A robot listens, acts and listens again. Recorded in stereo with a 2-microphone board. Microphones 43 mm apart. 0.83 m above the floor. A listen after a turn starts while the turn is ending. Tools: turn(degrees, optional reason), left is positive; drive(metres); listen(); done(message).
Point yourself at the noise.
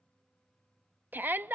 turn(degrees=-50, reason="The shout: about 50° right or 130° right.")
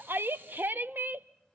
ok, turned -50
turn(degrees=-70, reason="So it is at 70° right.")
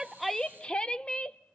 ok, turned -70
turn(degrees=25, reason="The shout is now 25° left.")
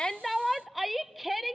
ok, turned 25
done("Found it: a shout, straight ahead.")